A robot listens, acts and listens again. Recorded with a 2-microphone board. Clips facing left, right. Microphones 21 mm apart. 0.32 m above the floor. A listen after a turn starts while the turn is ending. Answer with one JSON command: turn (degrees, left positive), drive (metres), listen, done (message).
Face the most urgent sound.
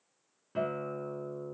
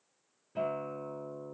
{"listen": true}
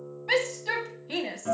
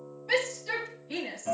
{"turn": 45}
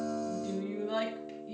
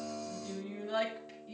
{"turn": 10}
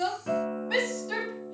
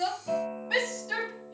{"done": "Facing the shout."}